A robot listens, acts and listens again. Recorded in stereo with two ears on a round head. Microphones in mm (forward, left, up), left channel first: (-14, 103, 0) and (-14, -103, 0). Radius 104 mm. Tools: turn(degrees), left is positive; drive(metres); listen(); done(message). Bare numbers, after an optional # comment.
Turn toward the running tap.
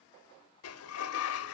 listen()
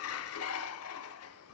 listen()
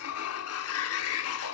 done("I can't make out a running tap to turn to.")